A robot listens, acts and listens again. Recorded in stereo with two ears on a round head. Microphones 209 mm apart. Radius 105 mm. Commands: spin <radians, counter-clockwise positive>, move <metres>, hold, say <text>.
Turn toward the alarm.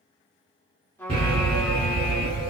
spin -0.44
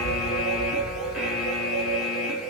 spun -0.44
say Facing the alarm, 1 to 2 m away.